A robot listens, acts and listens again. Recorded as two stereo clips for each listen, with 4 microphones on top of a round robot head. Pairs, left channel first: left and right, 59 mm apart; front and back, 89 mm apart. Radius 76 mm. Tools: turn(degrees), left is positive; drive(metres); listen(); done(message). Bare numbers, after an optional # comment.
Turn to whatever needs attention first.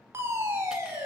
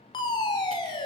# The fire alarm: 40° right.
turn(-40)
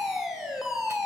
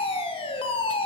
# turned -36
done("Facing the fire alarm, over 4 m away.")